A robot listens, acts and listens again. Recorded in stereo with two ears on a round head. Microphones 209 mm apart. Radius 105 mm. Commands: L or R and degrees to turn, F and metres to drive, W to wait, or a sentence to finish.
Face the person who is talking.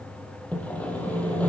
W
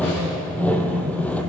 W
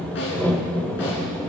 I can't make out anyone speaking to turn to.